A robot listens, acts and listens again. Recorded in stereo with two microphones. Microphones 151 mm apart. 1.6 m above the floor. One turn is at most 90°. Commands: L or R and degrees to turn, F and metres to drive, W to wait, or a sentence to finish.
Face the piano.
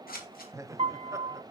R45
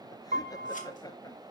R90
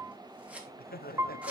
R20
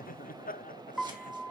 Found it: a piano, straight ahead.